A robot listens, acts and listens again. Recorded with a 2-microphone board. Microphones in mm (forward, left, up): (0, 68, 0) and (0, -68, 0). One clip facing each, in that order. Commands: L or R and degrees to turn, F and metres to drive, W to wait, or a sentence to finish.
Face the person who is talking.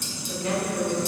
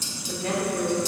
R45
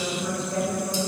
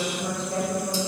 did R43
R90
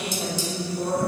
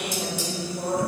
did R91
Facing the woman speaking, 1 to 2 m away.